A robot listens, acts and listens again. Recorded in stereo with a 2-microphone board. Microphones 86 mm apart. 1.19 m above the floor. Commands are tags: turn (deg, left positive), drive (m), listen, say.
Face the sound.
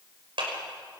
<turn deg="-90"/>
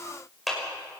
<say>Found it: a clap, straight ahead, over 4 m away.</say>